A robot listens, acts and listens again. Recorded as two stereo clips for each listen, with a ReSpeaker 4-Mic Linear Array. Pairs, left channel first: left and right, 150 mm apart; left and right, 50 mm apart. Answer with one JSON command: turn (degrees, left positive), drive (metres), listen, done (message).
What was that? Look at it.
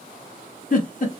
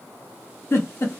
{"turn": 65}
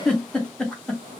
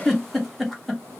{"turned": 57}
{"done": "Facing the giggle."}